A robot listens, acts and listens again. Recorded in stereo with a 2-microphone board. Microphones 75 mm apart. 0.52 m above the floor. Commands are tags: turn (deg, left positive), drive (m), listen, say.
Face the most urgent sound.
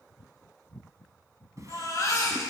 <turn deg="50"/>
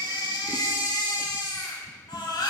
<turn deg="85"/>
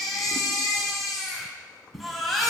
<say>Facing the baby crying.</say>